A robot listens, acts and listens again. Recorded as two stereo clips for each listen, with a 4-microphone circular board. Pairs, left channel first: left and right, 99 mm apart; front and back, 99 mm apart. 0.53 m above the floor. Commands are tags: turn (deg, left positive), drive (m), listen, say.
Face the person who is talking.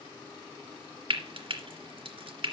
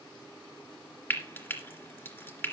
<listen/>
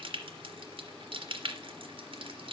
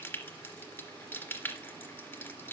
<listen/>
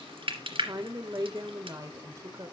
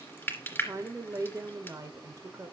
<turn deg="-130"/>
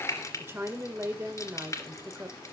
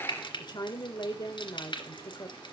<turn deg="-30"/>
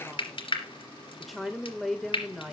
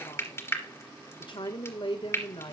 <say>Found it: a woman speaking, straight ahead.</say>